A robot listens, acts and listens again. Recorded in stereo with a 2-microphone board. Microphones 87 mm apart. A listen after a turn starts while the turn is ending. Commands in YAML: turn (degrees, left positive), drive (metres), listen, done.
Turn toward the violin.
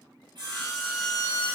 turn: 30
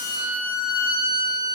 turn: -20
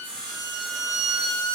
done: "Facing the violin."